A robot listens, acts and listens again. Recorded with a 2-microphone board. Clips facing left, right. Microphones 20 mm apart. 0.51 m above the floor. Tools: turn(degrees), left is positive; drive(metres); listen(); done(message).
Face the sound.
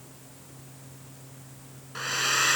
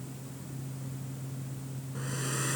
turn(degrees=65)
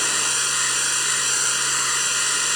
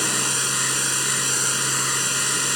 turn(degrees=10)
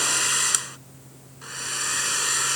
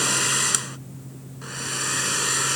done("Facing the hair dryer.")